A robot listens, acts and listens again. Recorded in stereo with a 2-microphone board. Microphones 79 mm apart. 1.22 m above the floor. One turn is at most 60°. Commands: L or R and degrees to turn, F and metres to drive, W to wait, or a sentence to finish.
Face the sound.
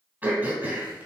R20
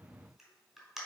Found it: throat clearing, straight ahead, 2 to 4 m away.